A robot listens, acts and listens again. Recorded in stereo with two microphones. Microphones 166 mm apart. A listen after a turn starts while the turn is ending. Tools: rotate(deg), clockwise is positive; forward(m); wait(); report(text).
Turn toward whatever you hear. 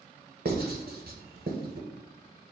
rotate(90)
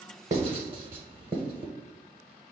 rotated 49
rotate(35)
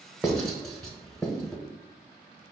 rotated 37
report("Facing the writing, under 1 m away.")